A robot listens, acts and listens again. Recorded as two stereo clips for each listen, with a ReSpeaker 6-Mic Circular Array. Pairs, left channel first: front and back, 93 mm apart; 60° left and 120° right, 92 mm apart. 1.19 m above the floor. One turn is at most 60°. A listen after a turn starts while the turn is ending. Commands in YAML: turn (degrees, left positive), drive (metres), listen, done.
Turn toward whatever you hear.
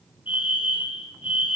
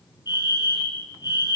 turn: 15
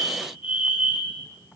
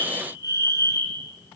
done: "Facing the fire alarm."